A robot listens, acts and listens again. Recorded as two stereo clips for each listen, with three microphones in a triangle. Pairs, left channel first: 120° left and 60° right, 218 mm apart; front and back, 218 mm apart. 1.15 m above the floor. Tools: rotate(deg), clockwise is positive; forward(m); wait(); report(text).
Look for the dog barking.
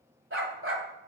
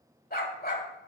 rotate(45)
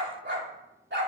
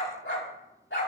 rotate(30)
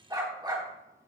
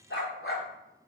rotate(-10)
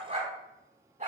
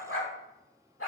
report("Found it: a dog barking, straight ahead, over 4 m away.")